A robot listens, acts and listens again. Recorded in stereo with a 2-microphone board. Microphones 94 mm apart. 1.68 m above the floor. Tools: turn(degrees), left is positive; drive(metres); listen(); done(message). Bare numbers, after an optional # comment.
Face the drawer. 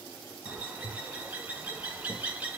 listen()
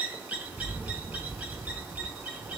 listen()
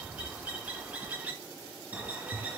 done("I can't make out a drawer, only a bird.")